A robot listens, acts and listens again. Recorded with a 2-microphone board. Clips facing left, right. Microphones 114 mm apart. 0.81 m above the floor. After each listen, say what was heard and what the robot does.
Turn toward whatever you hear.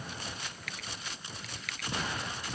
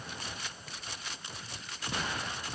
Turn 90° left.
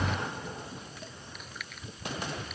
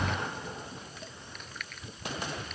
Found it: chewing, straight ahead.